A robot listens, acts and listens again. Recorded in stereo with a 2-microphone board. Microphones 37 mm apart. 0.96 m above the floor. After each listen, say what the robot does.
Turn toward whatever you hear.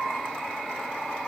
Keep listening.
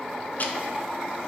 Turn 50° left.
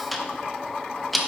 Found it: ticking, straight ahead, under 1 m away.